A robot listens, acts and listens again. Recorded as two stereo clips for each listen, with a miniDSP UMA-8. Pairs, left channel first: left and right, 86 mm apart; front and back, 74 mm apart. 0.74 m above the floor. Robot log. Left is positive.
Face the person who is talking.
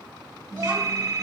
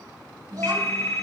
note: The child speaking: 135° right.
cmd yaw -135
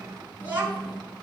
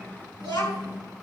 note: The child speaking is now 20° right.
cmd yaw -20
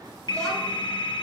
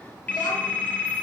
cmd idle
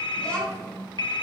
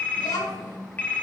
note: The child speaking is now 15° left.
cmd yaw +15
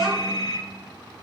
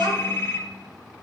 end: Facing the child speaking, over 4 m away.